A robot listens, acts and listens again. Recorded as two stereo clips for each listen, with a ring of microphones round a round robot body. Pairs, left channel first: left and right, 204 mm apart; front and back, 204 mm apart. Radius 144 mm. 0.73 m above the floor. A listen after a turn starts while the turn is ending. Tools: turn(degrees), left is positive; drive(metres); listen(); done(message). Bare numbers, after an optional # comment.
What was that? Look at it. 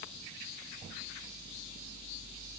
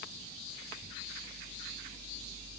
listen()
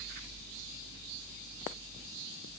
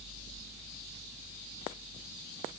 listen()
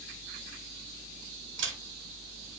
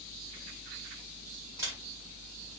# The camera shutter: 105° right.
turn(-105)
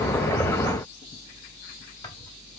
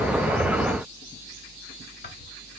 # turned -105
listen()
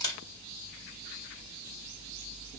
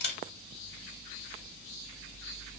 # The camera shutter is now 20° left.
turn(20)
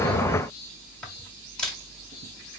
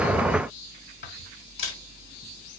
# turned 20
done("Facing the camera shutter, 1 to 2 m away.")